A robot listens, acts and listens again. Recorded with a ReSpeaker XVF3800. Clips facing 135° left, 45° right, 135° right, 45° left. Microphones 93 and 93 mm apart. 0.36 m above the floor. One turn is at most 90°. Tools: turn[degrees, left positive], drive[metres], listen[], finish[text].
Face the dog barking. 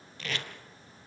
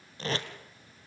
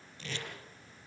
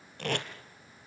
Action: listen[]
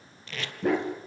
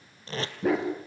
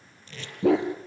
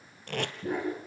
Thought: The dog barking: 135° right.
Action: turn[-90]
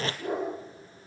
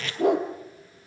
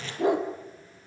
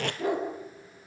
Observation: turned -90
Thought: The dog barking is now 65° right.
Action: turn[-65]
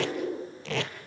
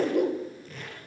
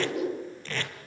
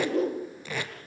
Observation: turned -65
Thought: The dog barking is now 10° right.
Action: turn[-10]
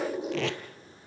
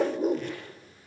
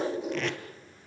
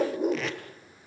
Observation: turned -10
Action: finish[Facing the dog barking, over 4 m away.]